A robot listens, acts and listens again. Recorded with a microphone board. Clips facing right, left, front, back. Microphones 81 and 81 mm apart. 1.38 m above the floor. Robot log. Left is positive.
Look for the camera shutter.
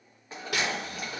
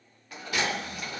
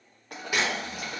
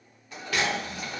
note: The camera shutter: 75° right.
cmd yaw -75
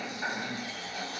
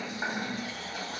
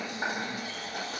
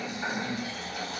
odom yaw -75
cmd idle
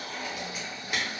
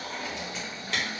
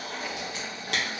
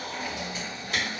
note: The camera shutter is now 15° right.
cmd yaw -15
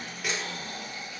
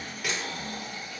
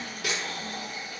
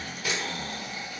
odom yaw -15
end: Facing the camera shutter.